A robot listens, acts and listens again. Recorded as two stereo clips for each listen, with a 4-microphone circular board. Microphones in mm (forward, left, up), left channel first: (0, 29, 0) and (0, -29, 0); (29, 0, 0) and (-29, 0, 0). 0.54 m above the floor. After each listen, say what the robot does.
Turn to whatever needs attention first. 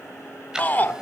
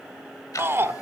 Turn 145° left.
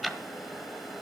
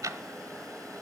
Keep listening.
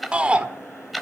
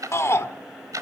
Turn 20° right.
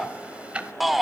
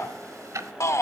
Facing the shout.